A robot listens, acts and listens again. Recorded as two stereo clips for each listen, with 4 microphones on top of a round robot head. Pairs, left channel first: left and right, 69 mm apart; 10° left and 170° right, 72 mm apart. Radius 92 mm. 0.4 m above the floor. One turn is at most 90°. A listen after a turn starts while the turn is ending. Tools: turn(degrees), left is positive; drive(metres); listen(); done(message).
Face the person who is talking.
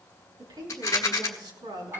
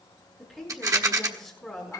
turn(degrees=-85)
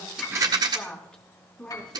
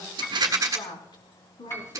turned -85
turn(degrees=15)
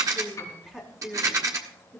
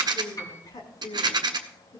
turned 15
done("Found it: a woman speaking, straight ahead, over 4 m away.")